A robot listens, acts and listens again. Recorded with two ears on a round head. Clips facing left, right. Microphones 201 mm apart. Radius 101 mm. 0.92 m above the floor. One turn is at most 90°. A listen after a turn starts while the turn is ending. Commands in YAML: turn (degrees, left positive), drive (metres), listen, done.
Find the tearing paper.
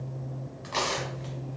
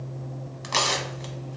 turn: -60
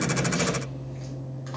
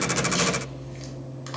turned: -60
turn: -40
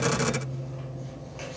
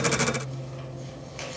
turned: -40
listen: true
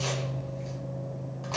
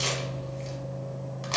turn: -25
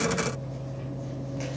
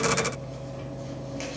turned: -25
listen: true
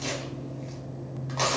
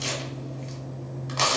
turn: -15
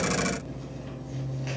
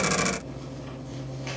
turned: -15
listen: true
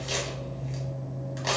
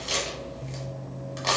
done: "Found it: tearing paper, straight ahead, 1 to 2 m away."